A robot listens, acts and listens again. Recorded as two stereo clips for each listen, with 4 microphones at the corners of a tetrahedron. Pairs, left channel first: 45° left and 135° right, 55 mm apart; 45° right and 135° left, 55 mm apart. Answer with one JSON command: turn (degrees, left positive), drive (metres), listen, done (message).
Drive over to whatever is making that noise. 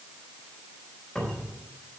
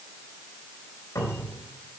{"turn": -30}
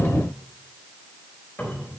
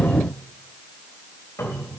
{"turn": -10}
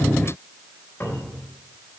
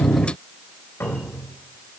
{"drive": 1.0}
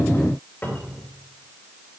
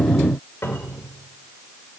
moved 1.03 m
{"drive": 1.0}
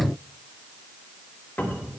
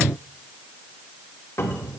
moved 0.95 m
{"drive": 1.0}
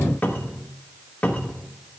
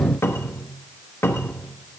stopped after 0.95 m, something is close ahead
{"turn": -10}
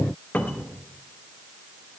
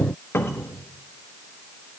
{"done": "Arrived at the cupboard door, straight ahead."}